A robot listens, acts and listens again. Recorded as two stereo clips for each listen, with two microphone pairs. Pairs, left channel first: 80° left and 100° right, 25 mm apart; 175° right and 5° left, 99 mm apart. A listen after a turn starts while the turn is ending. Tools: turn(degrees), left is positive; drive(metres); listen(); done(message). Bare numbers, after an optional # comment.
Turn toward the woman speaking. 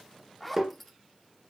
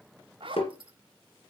listen()
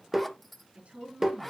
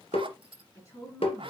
# The woman speaking: 120° right.
turn(-120)
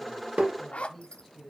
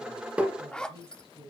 done("Facing the woman speaking, over 4 m away.")